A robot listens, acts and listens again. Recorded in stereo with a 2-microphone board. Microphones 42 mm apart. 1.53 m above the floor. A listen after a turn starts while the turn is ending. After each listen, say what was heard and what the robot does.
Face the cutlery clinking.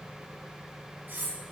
The cutlery clinking: about 55° right or 125° right. Turn 55° right.
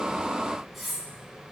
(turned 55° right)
Found it: cutlery clinking, straight ahead, over 4 m away.